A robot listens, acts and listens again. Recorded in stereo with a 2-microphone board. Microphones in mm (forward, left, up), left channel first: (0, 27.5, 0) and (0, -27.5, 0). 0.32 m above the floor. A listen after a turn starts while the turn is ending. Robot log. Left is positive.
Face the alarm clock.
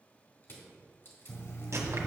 note: The alarm clock: about 45° left or 135° left.
cmd yaw +45
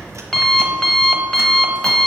note: So it is at 15° left.
cmd yaw +15
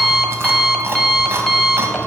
end: Found it: an alarm clock, straight ahead.